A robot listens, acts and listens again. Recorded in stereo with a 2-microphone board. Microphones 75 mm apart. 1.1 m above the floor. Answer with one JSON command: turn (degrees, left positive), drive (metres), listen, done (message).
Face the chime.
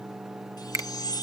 {"turn": 60}
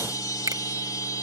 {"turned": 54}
{"turn": 65}
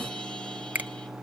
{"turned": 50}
{"turn": 15}
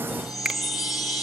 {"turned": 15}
{"done": "Facing the chime, 2 to 4 m away."}